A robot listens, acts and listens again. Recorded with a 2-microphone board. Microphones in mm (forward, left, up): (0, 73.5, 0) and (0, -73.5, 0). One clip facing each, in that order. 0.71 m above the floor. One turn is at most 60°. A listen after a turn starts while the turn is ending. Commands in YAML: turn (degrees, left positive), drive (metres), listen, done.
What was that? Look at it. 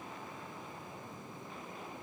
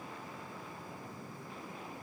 listen: true
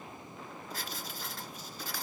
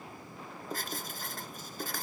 turn: -50
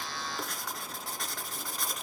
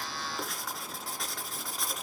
done: "Facing the writing, 2 to 4 m away."